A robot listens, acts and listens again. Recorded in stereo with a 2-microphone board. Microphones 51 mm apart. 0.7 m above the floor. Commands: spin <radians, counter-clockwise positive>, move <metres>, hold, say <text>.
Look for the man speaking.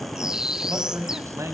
spin -1.31
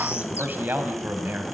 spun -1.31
spin -0.70
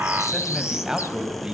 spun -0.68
spin -0.26
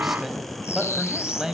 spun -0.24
spin -0.17
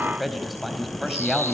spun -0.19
say Facing the man speaking.